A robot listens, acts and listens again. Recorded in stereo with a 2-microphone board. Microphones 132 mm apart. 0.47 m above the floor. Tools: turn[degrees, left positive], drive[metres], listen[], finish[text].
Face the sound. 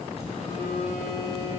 Thought: The phone buzzing: about 50° left or 130° left.
Action: turn[50]
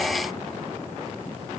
Action: listen[]
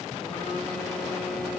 Action: listen[]
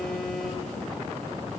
Action: finish[Facing the phone buzzing.]